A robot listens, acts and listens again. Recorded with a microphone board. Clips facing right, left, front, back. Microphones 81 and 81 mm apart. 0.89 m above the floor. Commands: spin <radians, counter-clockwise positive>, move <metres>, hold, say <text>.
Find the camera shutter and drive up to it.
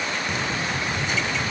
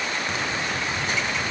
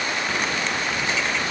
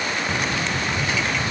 hold
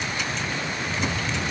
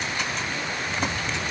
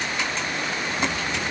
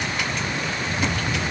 hold
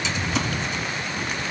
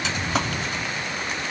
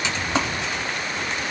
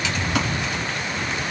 say I can't make out a camera shutter to turn to.